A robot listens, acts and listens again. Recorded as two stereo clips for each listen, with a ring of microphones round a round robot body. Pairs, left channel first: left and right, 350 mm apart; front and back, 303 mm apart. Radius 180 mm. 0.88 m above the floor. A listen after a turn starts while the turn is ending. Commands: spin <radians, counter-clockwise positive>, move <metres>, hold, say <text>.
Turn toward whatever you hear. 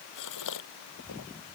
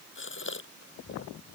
spin 0.87
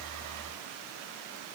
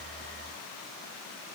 say Facing where the gasp came from. I can't hear it now.